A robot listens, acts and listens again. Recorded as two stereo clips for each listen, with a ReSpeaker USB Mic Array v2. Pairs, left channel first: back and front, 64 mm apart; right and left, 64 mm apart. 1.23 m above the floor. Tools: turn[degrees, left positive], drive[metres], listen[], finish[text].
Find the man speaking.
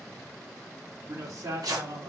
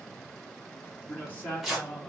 Thought: The man speaking: 25° right.
Action: turn[-25]
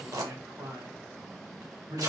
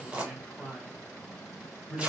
Action: finish[Found it: a man speaking, straight ahead, 2 to 4 m away.]